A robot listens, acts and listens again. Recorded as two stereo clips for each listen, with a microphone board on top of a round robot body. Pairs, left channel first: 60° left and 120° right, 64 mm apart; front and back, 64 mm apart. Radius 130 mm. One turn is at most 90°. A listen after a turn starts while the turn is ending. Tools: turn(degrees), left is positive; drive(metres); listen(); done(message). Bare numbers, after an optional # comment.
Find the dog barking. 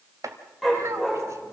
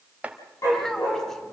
# The dog barking: 30° right.
turn(-30)
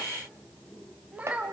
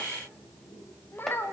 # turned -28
listen()
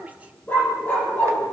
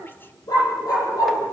done("Facing the dog barking.")